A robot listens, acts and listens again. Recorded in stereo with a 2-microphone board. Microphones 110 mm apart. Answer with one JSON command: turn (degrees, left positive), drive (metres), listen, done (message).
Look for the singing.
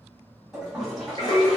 {"turn": 50}
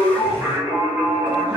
{"turn": -25}
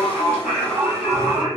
{"turn": -10}
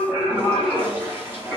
{"turn": -10}
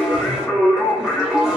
{"done": "Facing the singing, 2 to 4 m away."}